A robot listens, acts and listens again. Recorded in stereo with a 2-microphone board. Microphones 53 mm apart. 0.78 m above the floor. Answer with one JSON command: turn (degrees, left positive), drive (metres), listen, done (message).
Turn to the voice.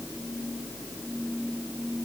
{"listen": true}
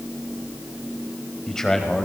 {"turn": 30}
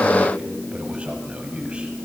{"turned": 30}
{"turn": -20}
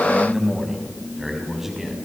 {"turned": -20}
{"done": "Found it: a man speaking, straight ahead."}